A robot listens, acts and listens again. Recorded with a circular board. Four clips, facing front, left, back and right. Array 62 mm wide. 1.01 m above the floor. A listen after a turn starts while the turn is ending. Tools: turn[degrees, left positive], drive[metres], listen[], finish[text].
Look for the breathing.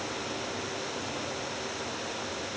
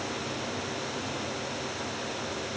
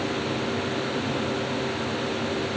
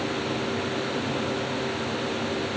Action: listen[]
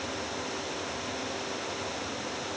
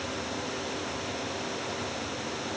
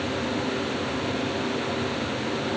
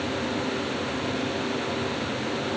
Action: listen[]
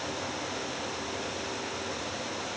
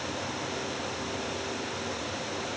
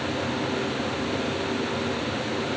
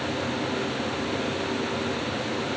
Action: finish[I can't make out breathing.]